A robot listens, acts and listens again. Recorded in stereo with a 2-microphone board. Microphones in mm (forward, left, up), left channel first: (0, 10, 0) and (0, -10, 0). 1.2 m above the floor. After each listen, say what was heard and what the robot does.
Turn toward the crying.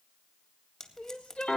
Turn 90° left.
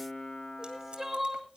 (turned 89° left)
So it is at 10° right. Turn 10° right.
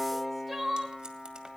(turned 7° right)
Found it: crying, straight ahead, 1 to 2 m away.